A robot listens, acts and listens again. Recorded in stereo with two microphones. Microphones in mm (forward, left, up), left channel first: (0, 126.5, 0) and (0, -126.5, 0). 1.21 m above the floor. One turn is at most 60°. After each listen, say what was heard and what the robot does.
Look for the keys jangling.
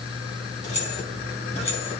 The keys jangling: about 25° left or 155° left. Turn 25° left.
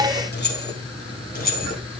The keys jangling: about 35° left or 145° left. Turn 35° left.
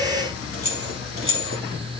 So it is at 125° left. Turn 60° left.
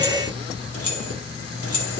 The keys jangling is now 65° left. Turn 60° left.
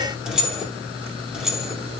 Facing the keys jangling.